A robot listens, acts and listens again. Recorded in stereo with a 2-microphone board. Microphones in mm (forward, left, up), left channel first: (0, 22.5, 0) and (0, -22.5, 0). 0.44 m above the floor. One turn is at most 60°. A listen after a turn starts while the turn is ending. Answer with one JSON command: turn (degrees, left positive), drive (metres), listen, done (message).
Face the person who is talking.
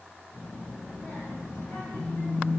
{"turn": 60}
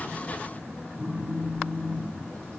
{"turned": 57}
{"turn": 30}
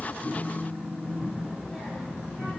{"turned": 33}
{"done": "Found it: a child speaking, straight ahead, 1 to 2 m away."}